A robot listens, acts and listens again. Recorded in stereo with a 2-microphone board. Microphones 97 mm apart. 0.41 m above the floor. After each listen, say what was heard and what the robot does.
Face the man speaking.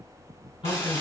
The man speaking: about 70° left or 110° left. Turn 70° left.
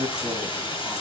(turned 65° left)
So it is at 25° left. Turn 25° left.
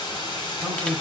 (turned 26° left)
Facing the man speaking.